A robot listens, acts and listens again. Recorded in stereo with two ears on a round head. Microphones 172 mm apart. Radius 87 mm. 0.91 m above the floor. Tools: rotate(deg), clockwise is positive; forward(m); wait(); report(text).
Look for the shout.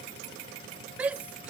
rotate(30)
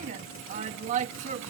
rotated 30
rotate(140)
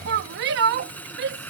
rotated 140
rotate(60)
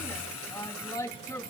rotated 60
rotate(-20)
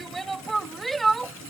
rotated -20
report("Facing the shout.")